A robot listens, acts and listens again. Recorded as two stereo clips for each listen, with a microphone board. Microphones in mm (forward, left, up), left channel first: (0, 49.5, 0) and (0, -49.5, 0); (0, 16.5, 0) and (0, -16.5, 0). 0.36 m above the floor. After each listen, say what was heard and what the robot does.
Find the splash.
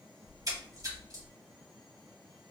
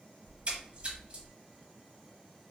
The splash: about 40° right or 140° right. Turn 40° right.
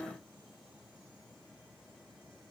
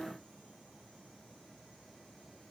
Keep listening.
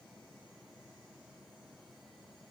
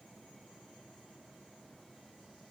I heard a splash, but can't make it out now. It was about straight ahead or 100° right.